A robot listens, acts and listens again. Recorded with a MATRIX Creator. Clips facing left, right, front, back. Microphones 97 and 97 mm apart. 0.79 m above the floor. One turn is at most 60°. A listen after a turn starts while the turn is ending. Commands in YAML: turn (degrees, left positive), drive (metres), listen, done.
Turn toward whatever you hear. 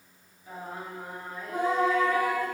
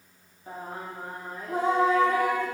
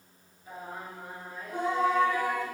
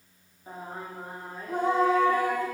turn: -60
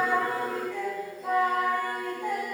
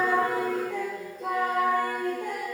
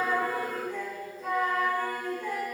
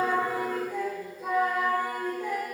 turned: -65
turn: -60
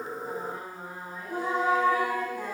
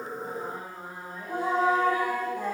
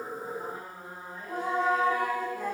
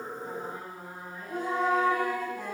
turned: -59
turn: -55
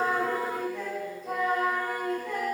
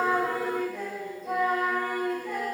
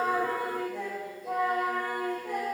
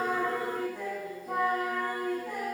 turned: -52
done: "Facing the singing."